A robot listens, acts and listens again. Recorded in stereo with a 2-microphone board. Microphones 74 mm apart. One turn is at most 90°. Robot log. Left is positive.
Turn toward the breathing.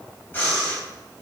note: The breathing: about 25° left or 155° left.
cmd yaw +25
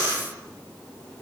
note: So it is at 130° left.
cmd yaw +90
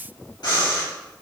note: The breathing is now 70° left.
cmd yaw +70
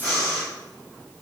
note: The breathing is now 35° left.
cmd yaw +35
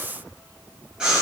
note: The breathing is now 10° right.
cmd yaw -10
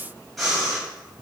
end: Found it: breathing, straight ahead.